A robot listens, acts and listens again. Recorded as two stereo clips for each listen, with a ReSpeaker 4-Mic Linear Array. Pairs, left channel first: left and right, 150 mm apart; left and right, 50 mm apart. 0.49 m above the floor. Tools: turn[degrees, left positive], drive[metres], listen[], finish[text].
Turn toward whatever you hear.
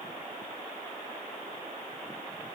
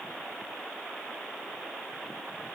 Action: listen[]
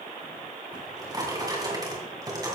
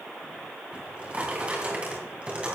Thought: The drawer: about 25° right or 155° right.
Action: turn[-25]
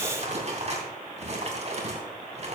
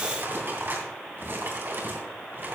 Thought: So it is at 130° right.
Action: turn[-130]
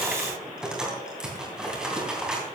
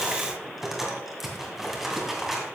Action: finish[Facing the drawer.]